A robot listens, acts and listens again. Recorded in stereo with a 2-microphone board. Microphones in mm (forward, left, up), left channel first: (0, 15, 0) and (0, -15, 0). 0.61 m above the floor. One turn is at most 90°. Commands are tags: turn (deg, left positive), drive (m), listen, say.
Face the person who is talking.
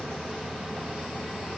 <listen/>
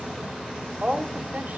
<turn deg="-60"/>
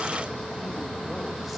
<listen/>
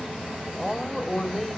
<say>Found it: a woman speaking, straight ahead, 2 to 4 m away.</say>